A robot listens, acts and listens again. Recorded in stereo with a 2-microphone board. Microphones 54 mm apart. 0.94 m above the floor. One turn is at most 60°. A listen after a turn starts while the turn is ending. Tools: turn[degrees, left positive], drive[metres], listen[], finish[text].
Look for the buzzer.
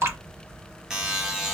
Action: turn[-30]
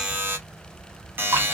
Thought: So it is at 140° right.
Action: turn[-60]
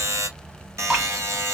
Thought: The buzzer is now 65° right.
Action: turn[-60]
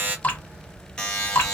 Thought: The buzzer is now 15° left.
Action: turn[15]
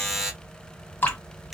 Action: finish[Facing the buzzer, 1 to 2 m away.]